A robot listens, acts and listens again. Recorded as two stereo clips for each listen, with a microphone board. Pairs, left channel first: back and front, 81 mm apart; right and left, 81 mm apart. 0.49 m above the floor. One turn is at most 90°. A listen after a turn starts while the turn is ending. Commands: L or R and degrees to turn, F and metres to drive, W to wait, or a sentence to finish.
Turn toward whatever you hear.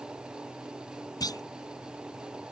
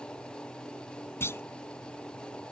R90
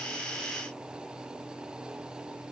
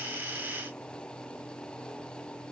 R55
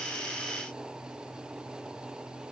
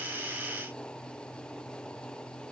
Facing where the clunk came from. I can't hear it now.